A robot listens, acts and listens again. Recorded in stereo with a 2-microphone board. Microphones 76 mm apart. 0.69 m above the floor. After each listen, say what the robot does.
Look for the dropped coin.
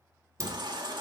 Turn 45° right.
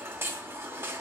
Keep listening.
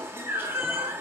I heard a dropped coin, but can't make it out now. It was about straight ahead or 90° right.